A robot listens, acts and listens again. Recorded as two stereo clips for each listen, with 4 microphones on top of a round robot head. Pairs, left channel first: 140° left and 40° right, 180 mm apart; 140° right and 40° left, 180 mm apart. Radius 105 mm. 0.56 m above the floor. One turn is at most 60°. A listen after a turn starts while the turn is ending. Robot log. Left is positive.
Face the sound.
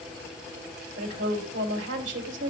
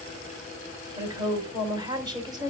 note: The woman speaking: 30° right.
cmd yaw -30
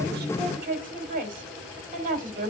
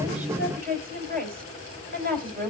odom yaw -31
end: Found it: a woman speaking, straight ahead.